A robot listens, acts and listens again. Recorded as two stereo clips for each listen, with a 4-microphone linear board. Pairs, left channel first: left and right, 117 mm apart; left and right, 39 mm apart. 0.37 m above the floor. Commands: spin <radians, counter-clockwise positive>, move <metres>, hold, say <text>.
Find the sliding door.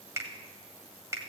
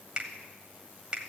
hold
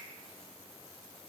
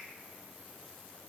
hold
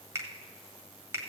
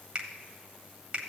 say I can't make out a sliding door to turn to.